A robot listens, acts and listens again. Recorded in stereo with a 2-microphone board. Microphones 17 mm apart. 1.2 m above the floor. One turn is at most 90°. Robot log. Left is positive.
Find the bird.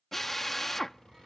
note: The bird: about 35° right or 145° right.
cmd yaw -35
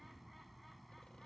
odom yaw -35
end: Facing the bird.